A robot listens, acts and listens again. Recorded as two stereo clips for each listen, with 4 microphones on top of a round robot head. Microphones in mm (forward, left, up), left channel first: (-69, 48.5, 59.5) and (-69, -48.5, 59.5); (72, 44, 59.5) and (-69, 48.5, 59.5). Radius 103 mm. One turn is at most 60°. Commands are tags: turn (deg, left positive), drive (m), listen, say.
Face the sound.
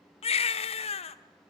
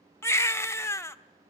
<turn deg="60"/>
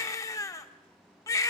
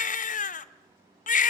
<turn deg="25"/>
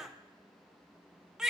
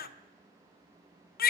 <say>Facing the baby crying.</say>